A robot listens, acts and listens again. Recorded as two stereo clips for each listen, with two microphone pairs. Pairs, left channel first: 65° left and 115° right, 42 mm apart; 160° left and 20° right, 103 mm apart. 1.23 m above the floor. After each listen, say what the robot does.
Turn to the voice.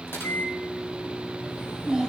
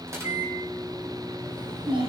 Turn 45° right.
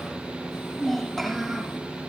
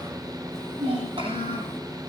Turn 20° right.
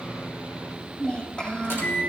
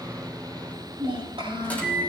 Found it: a child speaking, straight ahead, over 4 m away.